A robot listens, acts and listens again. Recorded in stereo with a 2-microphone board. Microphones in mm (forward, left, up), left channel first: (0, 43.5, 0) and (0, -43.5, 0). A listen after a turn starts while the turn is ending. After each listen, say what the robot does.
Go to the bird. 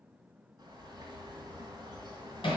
Turn 45° right.
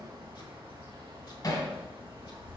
Turn 85° right.
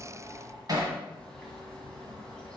Turn 10° left.
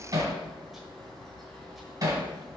Drive 1.0 m forward.
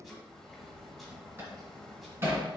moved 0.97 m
Drive 1.0 m forward.
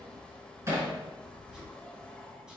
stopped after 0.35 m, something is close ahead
Turn 10° left.
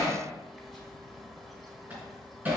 Arrived at the bird, straight ahead.